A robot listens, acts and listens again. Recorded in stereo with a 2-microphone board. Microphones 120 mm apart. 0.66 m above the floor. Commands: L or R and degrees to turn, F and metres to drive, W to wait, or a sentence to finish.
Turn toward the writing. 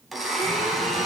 W
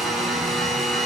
W
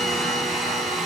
I can't make out writing to turn to.